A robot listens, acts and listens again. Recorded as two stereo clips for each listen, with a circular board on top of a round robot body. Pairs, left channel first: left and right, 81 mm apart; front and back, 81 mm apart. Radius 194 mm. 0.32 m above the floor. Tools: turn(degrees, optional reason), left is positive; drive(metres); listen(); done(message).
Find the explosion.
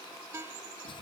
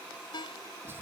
listen()
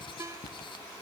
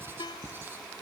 listen()
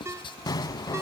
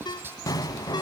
turn(degrees=45, reason="The explosion: 45° left.")
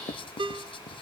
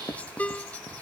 done("I heard an explosion from this way, but can't make it out now.")